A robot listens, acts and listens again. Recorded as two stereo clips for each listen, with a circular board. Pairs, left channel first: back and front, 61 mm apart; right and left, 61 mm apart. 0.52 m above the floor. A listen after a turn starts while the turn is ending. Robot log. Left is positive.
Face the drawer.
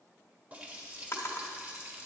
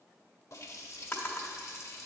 note: The drawer: 140° right.
cmd yaw -140
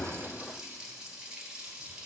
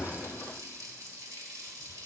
cmd idle
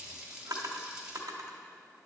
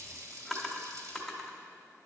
end: Facing the drawer, 1 to 2 m away.